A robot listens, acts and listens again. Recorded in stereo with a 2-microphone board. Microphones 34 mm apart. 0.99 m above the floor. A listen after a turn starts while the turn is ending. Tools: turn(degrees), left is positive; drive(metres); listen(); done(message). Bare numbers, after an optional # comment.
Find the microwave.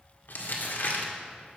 listen()
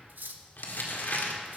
listen()
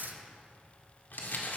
done("I can't make out a microwave, only cutlery clinking and crumpling.")